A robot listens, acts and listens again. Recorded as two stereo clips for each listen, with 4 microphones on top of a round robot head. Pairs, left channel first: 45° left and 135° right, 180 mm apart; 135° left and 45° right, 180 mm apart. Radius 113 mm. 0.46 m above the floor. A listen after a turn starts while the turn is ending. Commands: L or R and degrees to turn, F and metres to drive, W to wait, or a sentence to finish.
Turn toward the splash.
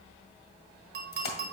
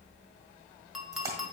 L25
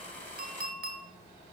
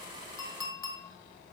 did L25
Facing where the splash came from. I can't hear it now.